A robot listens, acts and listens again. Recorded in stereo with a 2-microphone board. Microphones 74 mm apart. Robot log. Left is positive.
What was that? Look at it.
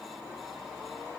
cmd idle
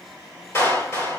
note: The clap: about 35° left or 145° left.
cmd yaw +35
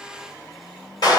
note: So it is at 115° left.
cmd yaw +115
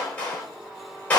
note: The clap is now 25° left.
cmd yaw +25
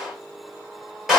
end: Facing the clap.